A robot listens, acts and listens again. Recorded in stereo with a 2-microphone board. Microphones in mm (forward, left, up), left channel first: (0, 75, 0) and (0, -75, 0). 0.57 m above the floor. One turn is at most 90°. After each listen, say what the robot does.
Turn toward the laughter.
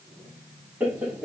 Turn 30° right.
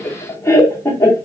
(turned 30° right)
Turn 20° left.
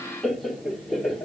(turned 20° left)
Found it: laughter, straight ahead.